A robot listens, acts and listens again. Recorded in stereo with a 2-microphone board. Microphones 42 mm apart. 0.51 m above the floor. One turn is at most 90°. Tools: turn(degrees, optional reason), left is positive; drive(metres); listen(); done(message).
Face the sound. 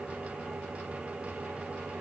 listen()
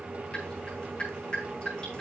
turn(degrees=15, reason="The dripping: about 15° left or 165° left.")
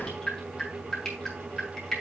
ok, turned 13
done("Found it: dripping, straight ahead, over 4 m away.")